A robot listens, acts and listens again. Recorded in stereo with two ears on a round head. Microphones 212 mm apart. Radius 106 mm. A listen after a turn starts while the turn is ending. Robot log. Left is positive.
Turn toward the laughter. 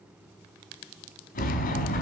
cmd idle
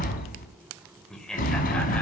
cmd yaw +30
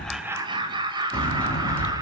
note: So it is at 20° right.
cmd yaw -20
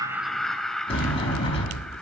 end: Facing the laughter, 2 to 4 m away.